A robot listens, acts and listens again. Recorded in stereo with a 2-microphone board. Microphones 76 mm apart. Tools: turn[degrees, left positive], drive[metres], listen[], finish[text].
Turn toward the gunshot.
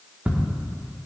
Action: listen[]
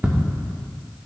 Action: listen[]
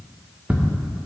Action: finish[I can't make out a gunshot to turn to.]